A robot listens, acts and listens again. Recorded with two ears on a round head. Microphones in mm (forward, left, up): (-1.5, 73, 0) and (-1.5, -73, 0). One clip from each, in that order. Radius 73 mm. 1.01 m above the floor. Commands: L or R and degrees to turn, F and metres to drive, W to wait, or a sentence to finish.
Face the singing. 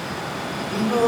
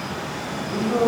L75
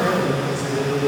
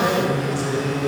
Facing the singing.